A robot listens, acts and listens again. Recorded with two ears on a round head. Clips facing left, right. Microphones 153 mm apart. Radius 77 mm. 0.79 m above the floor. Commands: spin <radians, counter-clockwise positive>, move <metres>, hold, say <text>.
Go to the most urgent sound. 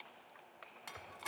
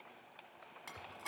hold
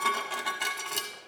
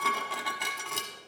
hold
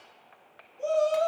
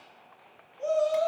spin 0.70
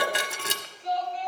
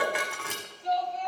move 1.0
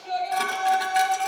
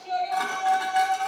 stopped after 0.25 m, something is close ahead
say Blocked. The shout is further on, straight ahead.